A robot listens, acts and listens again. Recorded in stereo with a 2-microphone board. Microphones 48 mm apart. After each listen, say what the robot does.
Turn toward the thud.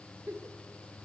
Keep listening.
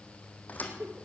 Turn 35° left.
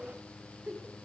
Keep listening.
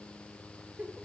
I heard a thud, but can't make it out now. It was about straight ahead or 110° left.